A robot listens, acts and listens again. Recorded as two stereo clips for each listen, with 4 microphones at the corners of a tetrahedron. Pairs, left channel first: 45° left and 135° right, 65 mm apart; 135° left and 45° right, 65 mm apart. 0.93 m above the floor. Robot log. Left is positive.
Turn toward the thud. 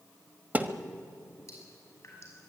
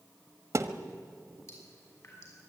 note: The thud: 75° right.
cmd yaw -75
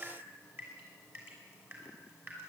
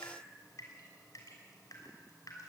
end: Facing where the thud came from. I can't hear it now.